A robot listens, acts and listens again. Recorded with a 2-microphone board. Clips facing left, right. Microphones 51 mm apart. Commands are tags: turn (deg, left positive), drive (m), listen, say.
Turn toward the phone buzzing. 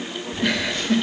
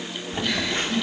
<turn deg="-35"/>
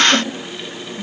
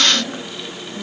<turn deg="-110"/>
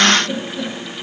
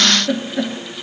<listen/>
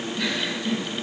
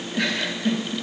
<listen/>
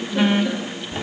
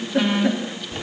<turn deg="10"/>
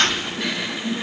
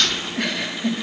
<say>Facing the phone buzzing.</say>